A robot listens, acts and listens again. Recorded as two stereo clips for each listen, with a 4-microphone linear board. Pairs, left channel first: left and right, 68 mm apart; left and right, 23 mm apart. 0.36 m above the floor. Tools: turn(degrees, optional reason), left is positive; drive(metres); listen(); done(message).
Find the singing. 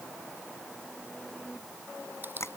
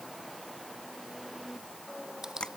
listen()
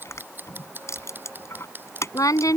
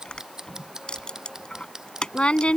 turn(degrees=60, reason="The singing: about 60° left or 120° left.")
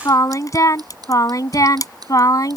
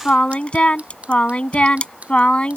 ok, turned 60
turn(degrees=65, reason="So it is at 65° left.")
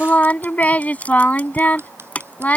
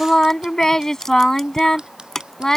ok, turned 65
turn(degrees=25, reason="The singing is now 25° left.")
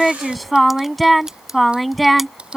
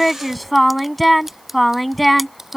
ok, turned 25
done("Found it: singing, straight ahead.")